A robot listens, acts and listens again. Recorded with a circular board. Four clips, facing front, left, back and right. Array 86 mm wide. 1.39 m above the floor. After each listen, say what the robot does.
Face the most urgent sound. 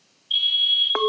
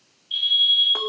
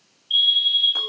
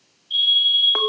Turn 20° left.
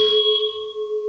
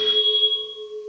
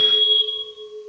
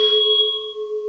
Found it: a fire alarm, straight ahead.